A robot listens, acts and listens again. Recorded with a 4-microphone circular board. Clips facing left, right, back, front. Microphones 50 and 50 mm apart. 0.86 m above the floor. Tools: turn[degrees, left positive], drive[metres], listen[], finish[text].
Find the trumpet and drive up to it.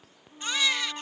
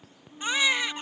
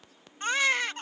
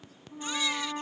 Action: drive[1.0]
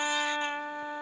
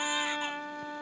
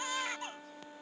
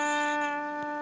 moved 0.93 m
Thought: The trumpet is now 15° left.
Action: turn[15]
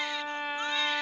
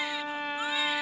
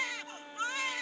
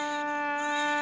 Action: drive[1.0]
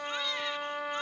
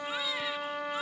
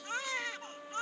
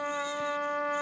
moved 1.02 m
Action: drive[1.0]
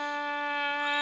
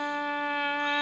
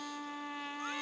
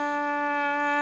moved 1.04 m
Action: drive[1.0]
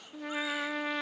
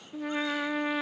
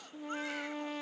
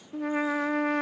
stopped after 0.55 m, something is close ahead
Action: finish[I am next to the trumpet.]